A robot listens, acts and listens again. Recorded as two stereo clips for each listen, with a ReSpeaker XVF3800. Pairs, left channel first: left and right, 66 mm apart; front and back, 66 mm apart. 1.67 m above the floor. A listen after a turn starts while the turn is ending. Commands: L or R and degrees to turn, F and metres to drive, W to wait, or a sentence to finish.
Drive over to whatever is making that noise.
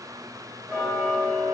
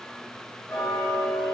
L10
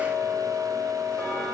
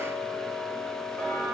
F1.0
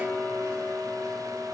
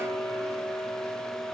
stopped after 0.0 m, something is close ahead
L10
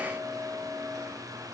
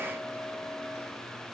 Something is in my way. I am facing the ticking but have not reached it.